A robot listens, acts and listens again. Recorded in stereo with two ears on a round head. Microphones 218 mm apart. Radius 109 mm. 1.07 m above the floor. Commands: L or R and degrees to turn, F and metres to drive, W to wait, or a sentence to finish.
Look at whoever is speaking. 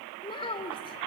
L20
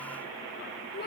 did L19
L140
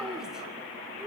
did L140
Facing the child speaking.